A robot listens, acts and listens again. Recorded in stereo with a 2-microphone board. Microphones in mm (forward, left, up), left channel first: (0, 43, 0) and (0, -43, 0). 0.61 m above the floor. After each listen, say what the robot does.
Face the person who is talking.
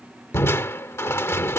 Keep listening.
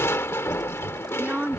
Turn 15° right.
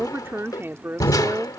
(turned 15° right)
Turn 150° right.
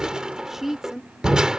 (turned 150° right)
Found it: a woman speaking, straight ahead.